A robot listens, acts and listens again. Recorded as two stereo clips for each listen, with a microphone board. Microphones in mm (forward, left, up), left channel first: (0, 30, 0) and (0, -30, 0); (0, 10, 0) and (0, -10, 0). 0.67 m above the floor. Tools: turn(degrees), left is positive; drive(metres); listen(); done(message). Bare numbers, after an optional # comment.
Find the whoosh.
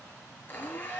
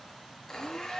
listen()
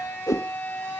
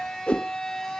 # The whoosh: about 70° left or 110° left.
turn(70)
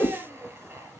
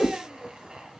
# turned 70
# So it is at 35° left.
turn(35)
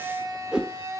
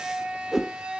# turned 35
# The whoosh is now 15° right.
turn(-15)
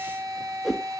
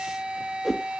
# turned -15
done("Facing the whoosh.")